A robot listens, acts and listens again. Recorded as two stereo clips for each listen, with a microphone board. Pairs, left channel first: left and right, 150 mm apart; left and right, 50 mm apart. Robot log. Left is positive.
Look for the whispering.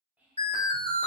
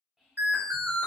cmd yaw -30
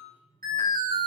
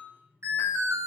cmd idle
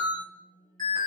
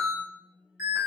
cmd idle
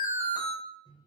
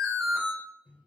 end: I heard whispering, but can't make it out now. It was about 20° left or 140° right.